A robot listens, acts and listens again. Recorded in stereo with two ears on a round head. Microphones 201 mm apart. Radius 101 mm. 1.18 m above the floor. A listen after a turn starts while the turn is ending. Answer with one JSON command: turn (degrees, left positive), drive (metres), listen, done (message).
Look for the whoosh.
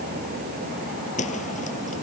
{"turn": 35}
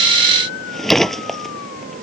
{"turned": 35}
{"done": "Found it: a whoosh, straight ahead."}